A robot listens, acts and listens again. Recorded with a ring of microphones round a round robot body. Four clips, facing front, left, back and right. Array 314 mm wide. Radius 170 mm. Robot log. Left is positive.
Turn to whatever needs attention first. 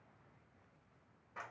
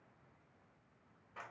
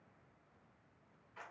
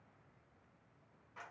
cmd idle
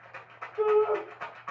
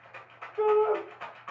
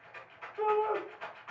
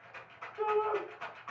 note: The shout: 60° left.
cmd yaw +60
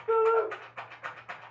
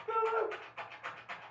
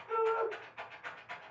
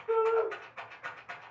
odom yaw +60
note: The shout is now 15° left.
cmd yaw +15
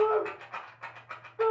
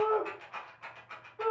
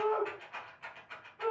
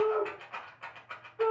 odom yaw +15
end: Found it: a shout, straight ahead.